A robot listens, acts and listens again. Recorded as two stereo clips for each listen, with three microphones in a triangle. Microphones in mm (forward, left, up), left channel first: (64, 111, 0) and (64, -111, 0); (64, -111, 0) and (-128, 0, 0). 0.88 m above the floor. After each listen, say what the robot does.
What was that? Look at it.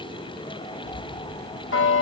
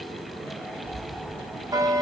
Turn 80° left.
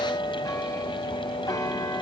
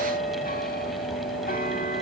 Turn 15° left.
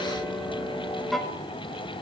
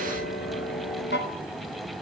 Found it: a bell, straight ahead.